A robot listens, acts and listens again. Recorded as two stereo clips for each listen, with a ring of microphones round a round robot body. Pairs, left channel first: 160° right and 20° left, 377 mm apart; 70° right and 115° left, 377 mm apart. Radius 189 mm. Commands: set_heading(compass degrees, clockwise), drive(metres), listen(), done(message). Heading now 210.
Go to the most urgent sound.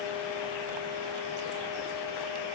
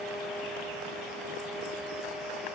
listen()
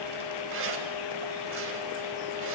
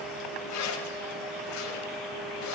listen()
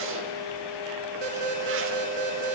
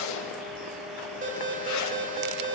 set_heading(165)
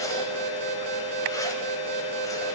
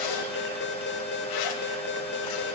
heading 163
drive(1.0)
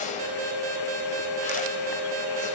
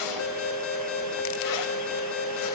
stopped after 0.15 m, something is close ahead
set_heading(178)
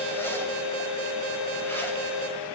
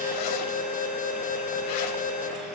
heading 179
done("Something is in my way. I am facing the alarm but have not reached it.")